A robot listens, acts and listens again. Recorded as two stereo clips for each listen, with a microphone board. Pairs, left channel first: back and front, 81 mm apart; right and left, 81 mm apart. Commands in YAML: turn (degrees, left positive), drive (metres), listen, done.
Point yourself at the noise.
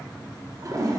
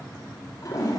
turn: -45
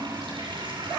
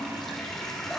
done: "Found it: a toilet flushing, straight ahead."